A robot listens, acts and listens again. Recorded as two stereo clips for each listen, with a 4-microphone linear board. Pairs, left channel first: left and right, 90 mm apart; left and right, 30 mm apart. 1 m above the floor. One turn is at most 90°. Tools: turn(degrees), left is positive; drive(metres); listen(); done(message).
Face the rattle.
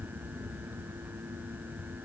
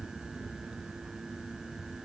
listen()
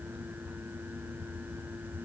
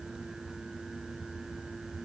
listen()
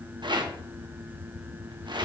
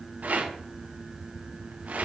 turn(degrees=-60)
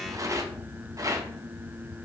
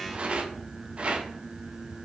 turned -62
turn(degrees=-45)
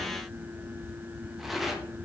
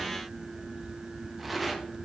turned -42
done("Found it: a rattle, straight ahead, 1 to 2 m away.")